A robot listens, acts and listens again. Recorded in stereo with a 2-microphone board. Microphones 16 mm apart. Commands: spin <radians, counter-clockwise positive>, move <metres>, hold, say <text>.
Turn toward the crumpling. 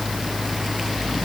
hold
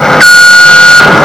hold
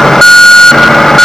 say I can't make out crumpling, only an alarm.